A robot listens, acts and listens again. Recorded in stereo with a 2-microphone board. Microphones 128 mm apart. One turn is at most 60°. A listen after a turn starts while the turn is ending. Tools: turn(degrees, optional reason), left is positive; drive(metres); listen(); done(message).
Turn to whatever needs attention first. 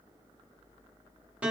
listen()
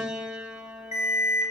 turn(degrees=60, reason="The alarm: about 65° left or 115° left.")
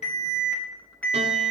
turn(degrees=10, reason="So it is at 10° left.")
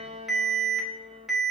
done("Found it: an alarm, straight ahead.")